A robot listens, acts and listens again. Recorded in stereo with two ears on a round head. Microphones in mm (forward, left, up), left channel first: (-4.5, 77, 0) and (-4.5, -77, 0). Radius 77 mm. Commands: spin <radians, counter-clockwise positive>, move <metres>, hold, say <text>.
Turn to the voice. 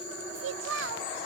spin -1.57
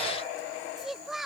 say Facing the child speaking.